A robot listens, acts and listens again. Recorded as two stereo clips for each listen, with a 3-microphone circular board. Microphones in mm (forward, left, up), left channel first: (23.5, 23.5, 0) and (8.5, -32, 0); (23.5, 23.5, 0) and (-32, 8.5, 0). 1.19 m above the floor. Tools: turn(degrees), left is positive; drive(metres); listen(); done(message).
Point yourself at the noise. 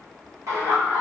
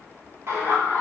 turn(degrees=-125)
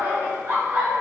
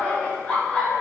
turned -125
turn(degrees=-60)
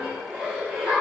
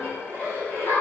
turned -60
turn(degrees=-30)
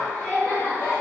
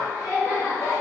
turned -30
turn(degrees=10)
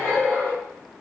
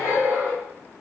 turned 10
done("Found it: laughter, straight ahead.")